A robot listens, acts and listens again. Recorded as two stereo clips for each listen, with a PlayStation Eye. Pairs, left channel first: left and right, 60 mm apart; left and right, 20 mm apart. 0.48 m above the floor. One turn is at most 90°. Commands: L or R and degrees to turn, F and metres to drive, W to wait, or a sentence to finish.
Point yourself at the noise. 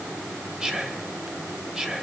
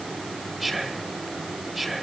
R30
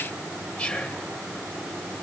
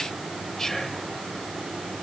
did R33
L20
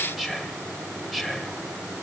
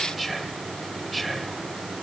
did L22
Facing the whispering, 2 to 4 m away.